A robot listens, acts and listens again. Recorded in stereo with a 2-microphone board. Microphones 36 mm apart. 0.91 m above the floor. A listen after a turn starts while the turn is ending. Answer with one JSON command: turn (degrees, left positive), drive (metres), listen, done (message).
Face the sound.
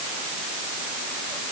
{"listen": true}
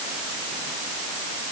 {"listen": true}
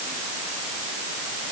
{"done": "I can't make out anything."}